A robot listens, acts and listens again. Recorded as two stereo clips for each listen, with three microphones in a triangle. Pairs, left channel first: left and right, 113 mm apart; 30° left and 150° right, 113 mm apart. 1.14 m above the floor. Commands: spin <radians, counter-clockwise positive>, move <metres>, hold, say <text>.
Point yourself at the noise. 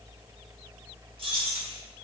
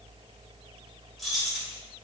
spin -1.13
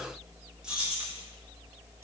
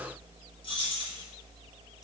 spin -0.26
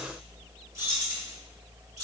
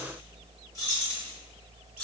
spin -0.61
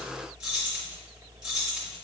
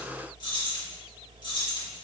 say Found it: keys jangling, straight ahead.